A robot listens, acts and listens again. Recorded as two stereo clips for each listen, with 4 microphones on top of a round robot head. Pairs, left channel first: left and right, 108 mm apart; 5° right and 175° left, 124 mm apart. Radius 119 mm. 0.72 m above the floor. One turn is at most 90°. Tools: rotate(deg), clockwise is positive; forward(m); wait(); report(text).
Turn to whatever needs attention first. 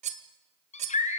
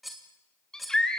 rotate(-80)
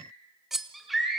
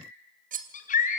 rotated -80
report("Found it: a scream, straight ahead, over 4 m away.")